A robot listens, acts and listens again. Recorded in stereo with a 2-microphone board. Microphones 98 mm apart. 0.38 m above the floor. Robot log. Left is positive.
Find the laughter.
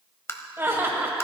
note: The laughter: about 25° right or 155° right.
cmd yaw -25
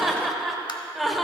end: Facing the laughter.